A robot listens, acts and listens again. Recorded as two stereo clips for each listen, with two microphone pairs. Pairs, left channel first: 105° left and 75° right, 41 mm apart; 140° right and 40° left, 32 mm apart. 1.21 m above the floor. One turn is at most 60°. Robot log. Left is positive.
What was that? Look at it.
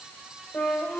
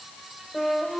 note: The flute: 140° left.
cmd yaw +60
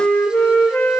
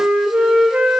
note: The flute is now 75° left.
cmd yaw +60
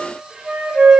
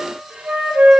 end: Facing the flute.